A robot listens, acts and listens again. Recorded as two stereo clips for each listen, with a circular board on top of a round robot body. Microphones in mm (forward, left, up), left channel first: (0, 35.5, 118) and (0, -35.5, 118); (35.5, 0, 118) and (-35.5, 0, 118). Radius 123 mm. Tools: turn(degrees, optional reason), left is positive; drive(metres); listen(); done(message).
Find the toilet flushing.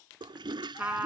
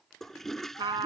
turn(degrees=-85, reason="The toilet flushing: 85° right.")
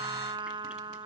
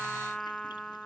listen()
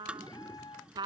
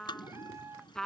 turn(degrees=-15, reason="The toilet flushing is now 15° right.")
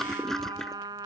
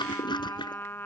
done("Found it: a toilet flushing, straight ahead.")